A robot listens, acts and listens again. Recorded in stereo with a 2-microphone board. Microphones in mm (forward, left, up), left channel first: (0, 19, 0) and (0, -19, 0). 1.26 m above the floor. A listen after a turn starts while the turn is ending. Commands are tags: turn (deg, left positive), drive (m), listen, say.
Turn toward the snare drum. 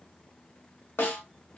<turn deg="90"/>
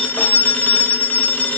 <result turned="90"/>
<listen/>
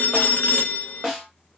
<turn deg="-10"/>
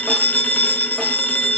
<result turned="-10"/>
<listen/>
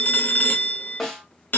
<say>Facing the snare drum.</say>